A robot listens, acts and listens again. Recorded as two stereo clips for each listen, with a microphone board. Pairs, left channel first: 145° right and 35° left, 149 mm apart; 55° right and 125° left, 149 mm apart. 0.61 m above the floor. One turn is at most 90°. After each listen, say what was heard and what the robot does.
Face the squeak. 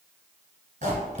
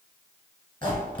Facing the squeak, 1 to 2 m away.